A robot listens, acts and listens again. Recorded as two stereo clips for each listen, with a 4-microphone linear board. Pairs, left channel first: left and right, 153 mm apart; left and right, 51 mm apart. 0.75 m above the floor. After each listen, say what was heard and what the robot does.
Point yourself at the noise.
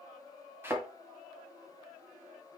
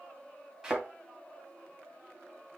Turn 30° right.
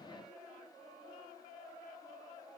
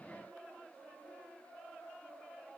Keep listening.
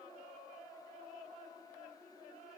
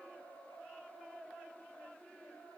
I heard a thud, but can't make it out now. It was about 15° left or 135° right.